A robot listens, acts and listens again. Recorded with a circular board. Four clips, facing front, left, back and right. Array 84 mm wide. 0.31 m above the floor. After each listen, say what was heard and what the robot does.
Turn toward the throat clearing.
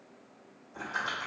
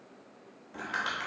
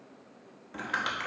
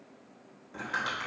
Keep listening.
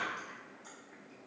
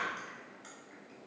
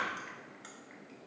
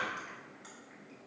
Keep listening.
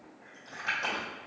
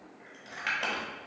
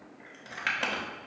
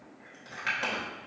I can't make out throat clearing to turn to.